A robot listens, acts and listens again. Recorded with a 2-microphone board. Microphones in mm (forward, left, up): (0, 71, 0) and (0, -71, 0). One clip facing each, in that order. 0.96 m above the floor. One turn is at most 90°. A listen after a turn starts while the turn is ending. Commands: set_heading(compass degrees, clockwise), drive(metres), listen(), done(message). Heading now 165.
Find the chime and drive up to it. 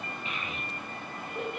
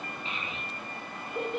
listen()
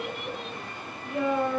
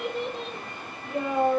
listen()
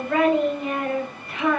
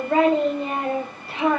done("I can't make out a chime, only a child speaking.")